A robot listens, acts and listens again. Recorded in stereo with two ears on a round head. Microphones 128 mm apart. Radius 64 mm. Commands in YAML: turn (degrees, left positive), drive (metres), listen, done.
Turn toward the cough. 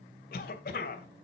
turn: 70
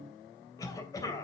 turn: 25
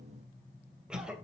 done: "Found it: a cough, straight ahead."